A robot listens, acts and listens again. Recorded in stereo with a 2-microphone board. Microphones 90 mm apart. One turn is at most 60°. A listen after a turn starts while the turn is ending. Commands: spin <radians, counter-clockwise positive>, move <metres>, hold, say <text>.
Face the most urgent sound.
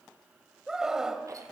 spin -0.52
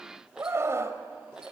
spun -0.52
spin -1.05
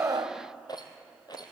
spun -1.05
spin -1.05
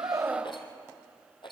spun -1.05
spin -0.35
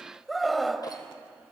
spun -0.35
say Facing the scream, 1 to 2 m away.